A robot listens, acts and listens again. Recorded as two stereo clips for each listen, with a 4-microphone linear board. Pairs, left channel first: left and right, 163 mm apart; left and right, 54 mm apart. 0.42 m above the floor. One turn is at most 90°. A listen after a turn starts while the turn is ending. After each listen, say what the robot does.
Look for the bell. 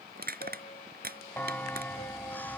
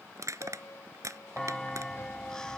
Turn 30° left.
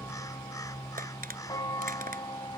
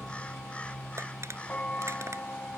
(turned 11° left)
Turn 90° left.
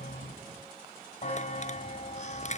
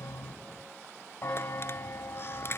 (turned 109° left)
Turn 50° left.
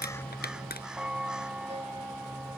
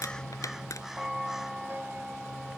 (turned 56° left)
Facing the bell.